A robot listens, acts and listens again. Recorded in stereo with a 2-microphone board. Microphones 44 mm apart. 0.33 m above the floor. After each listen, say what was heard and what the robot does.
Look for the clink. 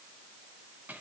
Keep listening.
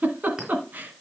The clink: about 20° right or 160° right. Turn 20° right.
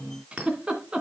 So it is at 140° right. Turn 140° right.
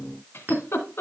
The clink is now 45° right. Turn 45° right.
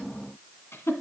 The clink is now 10° right. Turn 10° right.
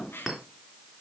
Found it: a clink, straight ahead, 2 to 4 m away.